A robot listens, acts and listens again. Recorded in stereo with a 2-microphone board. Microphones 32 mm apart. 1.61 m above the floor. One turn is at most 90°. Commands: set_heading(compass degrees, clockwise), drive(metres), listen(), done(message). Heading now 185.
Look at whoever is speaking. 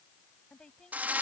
set_heading(160)
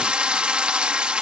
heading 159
listen()
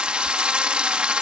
listen()
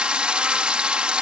done("I heard a woman speaking, but can't make it out now. It was about straight ahead or 125° left.")